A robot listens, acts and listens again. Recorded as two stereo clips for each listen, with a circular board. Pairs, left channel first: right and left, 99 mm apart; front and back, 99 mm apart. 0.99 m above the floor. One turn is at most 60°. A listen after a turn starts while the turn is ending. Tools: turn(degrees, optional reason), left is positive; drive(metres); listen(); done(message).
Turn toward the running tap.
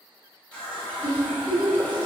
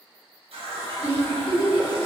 turn(degrees=-60, reason="The running tap: 170° right.")
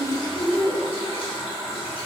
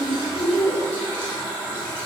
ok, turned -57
turn(degrees=-60, reason="The running tap is now 115° right.")
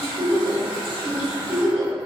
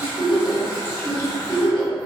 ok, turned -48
turn(degrees=-60, reason="The running tap is now 65° right.")
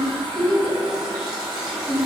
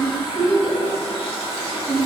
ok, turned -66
done("Facing the running tap.")